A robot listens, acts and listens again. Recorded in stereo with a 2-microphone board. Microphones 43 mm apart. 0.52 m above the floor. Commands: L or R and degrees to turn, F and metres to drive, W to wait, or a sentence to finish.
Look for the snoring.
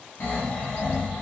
L45
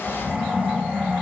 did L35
L95
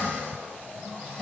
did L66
L30
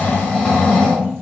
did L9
L20
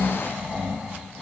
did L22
Facing the snoring.